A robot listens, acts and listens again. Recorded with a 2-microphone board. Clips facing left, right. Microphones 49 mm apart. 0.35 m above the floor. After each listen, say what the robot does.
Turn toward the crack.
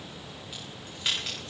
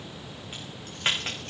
Turn 40° right.
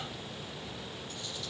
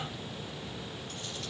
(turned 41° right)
Keep listening.
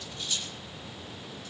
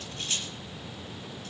I heard a crack, but can't make it out now. It was about straight ahead or 100° right.